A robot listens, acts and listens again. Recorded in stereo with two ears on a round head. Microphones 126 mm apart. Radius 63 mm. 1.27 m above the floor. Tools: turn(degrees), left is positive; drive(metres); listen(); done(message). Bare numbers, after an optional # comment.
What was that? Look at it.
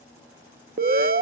# The alarm: about 60° right or 120° right.
turn(-60)
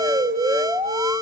# So it is at 25° right.
turn(-25)
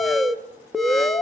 done("Found it: an alarm, straight ahead.")